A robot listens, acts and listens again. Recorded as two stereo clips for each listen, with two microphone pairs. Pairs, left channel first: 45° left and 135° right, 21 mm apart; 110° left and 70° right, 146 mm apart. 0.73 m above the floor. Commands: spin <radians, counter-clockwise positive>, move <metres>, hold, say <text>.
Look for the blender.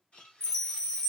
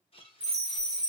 spin 1.05
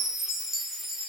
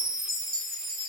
hold
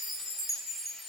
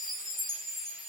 hold
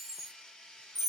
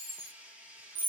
spin 0.17
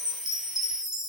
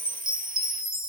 hold
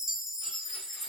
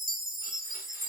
hold
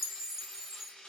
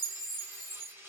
say Found it: a blender, straight ahead.